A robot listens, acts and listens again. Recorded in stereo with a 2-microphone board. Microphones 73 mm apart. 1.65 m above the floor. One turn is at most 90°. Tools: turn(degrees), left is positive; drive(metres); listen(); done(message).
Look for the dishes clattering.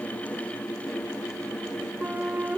listen()
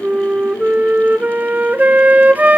listen()
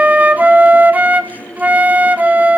done("I can't make out dishes clattering to turn to.")